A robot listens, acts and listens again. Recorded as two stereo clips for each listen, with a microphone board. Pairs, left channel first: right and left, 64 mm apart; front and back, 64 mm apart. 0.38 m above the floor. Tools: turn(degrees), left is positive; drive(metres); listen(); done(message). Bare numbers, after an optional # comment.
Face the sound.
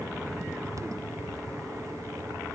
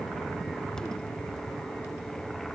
listen()
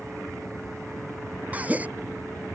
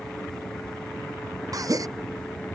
# The gasp: 155° left.
turn(155)
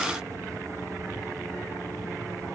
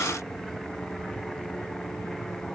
done("Facing where the gasp came from. I can't hear it now.")